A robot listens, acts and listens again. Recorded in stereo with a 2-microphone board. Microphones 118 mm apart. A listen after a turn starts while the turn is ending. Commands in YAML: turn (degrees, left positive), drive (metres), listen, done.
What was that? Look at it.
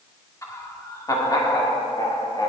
turn: 40
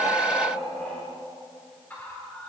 turn: 15
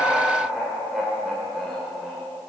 done: "Facing the laughter, 2 to 4 m away."